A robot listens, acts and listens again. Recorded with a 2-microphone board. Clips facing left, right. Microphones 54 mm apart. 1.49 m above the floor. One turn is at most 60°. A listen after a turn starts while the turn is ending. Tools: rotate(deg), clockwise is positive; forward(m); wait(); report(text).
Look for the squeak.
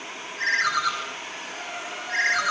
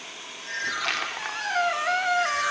rotate(60)
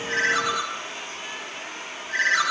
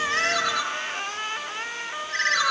rotate(55)
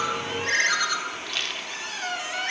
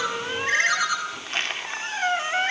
rotate(35)
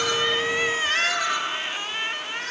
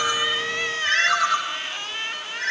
report("Found it: a squeak, straight ahead, 2 to 4 m away.")